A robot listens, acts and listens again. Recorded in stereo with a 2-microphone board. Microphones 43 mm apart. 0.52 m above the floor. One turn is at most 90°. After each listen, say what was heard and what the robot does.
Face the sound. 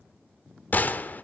The gunshot: about 45° left or 135° left. Turn 45° left.
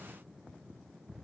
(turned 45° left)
Keep listening.
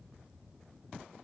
I heard a gunshot, but can't make it out now. It was about straight ahead or 90° left.